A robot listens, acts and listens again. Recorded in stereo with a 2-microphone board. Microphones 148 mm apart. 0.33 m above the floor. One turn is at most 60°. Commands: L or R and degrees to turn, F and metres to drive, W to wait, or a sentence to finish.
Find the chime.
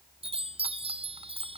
R40
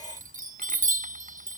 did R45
R60
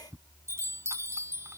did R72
R20
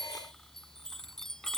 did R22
Found it: a chime, straight ahead.